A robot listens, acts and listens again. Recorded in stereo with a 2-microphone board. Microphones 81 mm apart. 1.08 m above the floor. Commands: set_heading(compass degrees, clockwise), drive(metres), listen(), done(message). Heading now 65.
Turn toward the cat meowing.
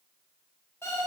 listen()
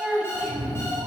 set_heading(135)
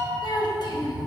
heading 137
done("Found it: a cat meowing, straight ahead.")